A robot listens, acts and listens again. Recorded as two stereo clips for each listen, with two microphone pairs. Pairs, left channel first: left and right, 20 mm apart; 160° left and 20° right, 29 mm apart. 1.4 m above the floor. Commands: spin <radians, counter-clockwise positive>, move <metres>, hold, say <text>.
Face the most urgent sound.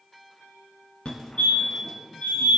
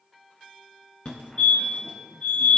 spin 1.92
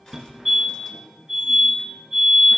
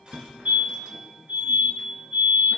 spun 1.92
spin -0.17
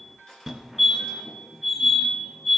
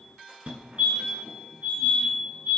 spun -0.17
say Facing the fire alarm, 1 to 2 m away.